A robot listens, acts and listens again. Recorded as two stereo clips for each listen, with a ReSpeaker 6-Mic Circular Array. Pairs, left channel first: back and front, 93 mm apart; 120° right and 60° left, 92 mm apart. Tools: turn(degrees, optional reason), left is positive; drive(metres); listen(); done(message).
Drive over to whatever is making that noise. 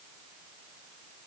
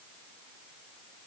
listen()
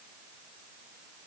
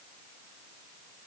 listen()
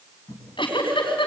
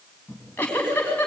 turn(degrees=170, reason="The giggle: 170° left.")
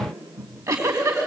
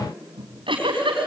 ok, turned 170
turn(degrees=50, reason="The giggle is now 50° left.")
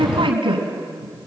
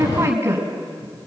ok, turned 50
drive(metres=1.0)
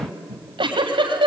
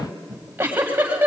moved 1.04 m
drive(metres=1.0)
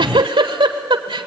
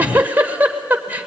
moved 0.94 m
turn(degrees=-10, reason="The giggle is now 10° right.")
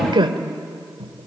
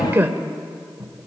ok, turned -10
drive(metres=1.0)
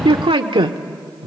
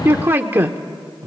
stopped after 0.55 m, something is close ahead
done("I am next to the giggle.")